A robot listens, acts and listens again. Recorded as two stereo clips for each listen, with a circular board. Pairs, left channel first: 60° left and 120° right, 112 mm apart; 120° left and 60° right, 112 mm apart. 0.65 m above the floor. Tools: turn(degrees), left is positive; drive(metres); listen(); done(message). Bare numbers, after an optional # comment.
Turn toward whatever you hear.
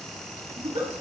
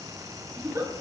# The giggle: 120° right.
turn(-120)
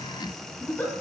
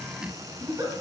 # The giggle is now 10° right.
turn(-10)
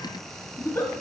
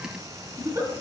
done("Found it: a giggle, straight ahead, 1 to 2 m away.")